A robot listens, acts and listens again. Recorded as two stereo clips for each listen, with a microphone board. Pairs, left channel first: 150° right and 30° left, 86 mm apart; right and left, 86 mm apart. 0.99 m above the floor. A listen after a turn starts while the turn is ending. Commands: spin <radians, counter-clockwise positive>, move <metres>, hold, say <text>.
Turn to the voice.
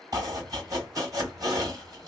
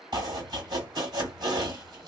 hold
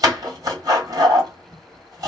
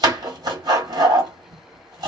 hold
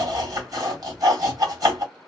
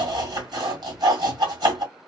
say I can't make out anyone speaking to turn to.